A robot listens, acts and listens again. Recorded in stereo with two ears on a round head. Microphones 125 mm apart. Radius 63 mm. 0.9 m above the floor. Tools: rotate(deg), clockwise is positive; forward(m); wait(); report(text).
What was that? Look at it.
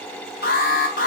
rotate(-70)
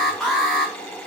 report("Facing the alarm.")